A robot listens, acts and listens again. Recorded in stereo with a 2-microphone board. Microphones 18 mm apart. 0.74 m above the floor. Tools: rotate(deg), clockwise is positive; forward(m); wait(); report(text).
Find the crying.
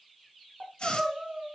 rotate(90)
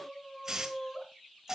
report("Found it: crying, straight ahead, 2 to 4 m away.")